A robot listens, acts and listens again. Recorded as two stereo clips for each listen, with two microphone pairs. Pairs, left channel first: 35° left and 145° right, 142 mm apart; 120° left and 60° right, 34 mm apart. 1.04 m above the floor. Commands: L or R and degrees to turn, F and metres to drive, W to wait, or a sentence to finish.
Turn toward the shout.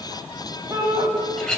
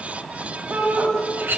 R85
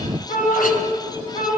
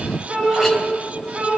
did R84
Facing the shout, over 4 m away.